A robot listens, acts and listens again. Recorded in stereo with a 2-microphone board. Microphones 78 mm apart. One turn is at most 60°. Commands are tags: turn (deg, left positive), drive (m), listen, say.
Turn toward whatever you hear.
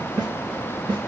<turn deg="-60"/>
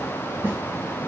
<turn deg="-25"/>
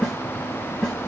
<say>Found it: a snare drum, straight ahead.</say>